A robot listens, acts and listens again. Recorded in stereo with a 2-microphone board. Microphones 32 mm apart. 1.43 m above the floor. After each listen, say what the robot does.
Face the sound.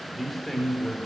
Turn 30° left.
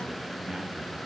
Keep listening.
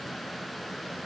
Keep listening.
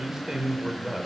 Turn 15° right.
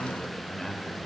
Turn 10° left.
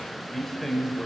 Found it: a man speaking, straight ahead, over 4 m away.